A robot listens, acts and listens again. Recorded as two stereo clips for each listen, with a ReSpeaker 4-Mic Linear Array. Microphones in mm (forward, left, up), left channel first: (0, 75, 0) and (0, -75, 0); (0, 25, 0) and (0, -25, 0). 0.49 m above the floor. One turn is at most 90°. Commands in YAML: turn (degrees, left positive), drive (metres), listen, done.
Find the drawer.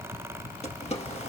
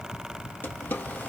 listen: true
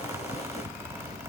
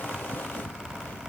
listen: true
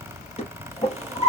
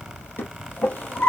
turn: 45
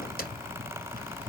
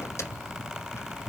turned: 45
listen: true
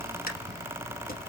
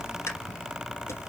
listen: true
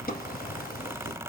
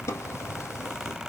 done: "I heard a drawer, but can't make it out now. It was about straight ahead or 90° left."